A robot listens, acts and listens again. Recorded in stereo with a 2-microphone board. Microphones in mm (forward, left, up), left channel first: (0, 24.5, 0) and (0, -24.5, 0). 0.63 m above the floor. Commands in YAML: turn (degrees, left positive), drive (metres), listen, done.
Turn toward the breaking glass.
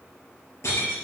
turn: 90
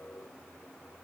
done: "I heard breaking glass from this way, but can't make it out now."